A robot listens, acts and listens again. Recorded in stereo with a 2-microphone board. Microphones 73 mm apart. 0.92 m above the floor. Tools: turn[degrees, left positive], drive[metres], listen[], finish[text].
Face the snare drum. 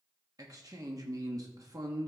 Action: listen[]
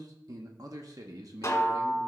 Thought: The snare drum: about 40° left or 140° left.
Action: turn[40]
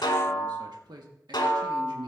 Thought: So it is at 100° left.
Action: turn[100]
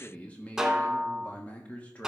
Action: finish[Facing the snare drum.]